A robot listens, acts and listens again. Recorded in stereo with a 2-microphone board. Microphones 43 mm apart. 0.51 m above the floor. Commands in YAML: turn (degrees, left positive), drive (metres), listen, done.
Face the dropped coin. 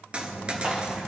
turn: -25
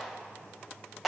listen: true
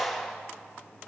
done: "I heard a dropped coin, but can't make it out now. It was about straight ahead or 130° right."